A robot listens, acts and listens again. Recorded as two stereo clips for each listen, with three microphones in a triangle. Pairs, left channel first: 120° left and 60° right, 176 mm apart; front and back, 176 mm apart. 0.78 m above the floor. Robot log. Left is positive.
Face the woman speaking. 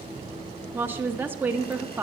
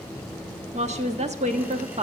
note: The woman speaking: 135° right.
cmd yaw -135
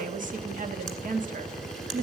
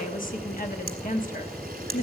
note: The woman speaking is now 30° right.
cmd yaw -30
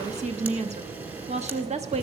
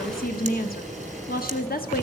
note: The woman speaking is now 15° right.
cmd yaw -15
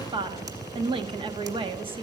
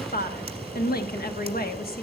end: Facing the woman speaking.